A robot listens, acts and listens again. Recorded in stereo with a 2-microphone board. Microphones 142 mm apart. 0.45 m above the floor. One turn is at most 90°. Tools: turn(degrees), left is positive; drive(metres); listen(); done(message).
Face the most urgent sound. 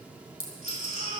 turn(degrees=-75)
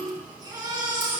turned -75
turn(degrees=-30)
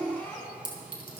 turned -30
turn(degrees=10)
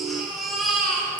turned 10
done("Found it: a baby crying, straight ahead.")